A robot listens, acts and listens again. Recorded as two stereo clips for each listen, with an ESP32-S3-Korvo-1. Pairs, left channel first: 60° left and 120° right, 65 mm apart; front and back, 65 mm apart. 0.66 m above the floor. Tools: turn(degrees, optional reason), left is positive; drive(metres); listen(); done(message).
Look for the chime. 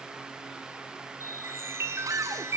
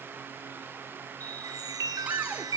turn(degrees=-165, reason="The chime: 165° right.")
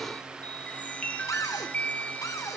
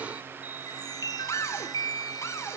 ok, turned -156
turn(degrees=-10, reason="The chime is now 10° right.")
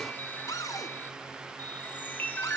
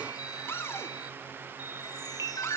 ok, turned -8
done("Found it: a chime, straight ahead, 2 to 4 m away.")